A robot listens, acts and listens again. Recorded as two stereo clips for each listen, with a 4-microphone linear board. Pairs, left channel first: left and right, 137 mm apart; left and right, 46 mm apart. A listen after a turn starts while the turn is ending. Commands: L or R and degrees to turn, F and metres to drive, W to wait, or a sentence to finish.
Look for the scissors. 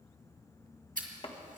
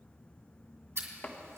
R90
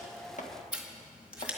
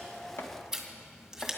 R10
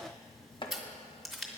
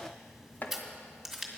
Facing the scissors.